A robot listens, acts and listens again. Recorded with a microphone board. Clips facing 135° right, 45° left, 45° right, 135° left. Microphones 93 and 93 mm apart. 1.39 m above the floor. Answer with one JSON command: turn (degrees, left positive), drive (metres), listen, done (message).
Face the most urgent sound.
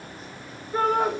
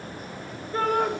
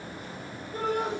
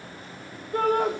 {"turn": 145}
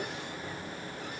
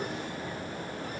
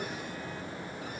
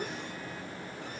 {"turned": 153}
{"turn": -10}
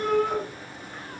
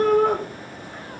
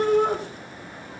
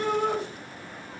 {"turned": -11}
{"done": "Facing the shout."}